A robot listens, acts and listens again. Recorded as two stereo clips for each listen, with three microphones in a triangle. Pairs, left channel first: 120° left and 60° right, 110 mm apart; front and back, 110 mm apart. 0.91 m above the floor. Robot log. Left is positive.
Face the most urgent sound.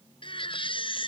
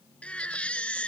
note: The baby crying: 80° left.
cmd yaw +80
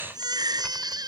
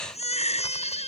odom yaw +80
note: The baby crying is now 10° right.
cmd yaw -10
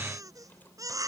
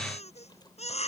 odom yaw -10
end: Found it: a baby crying, straight ahead.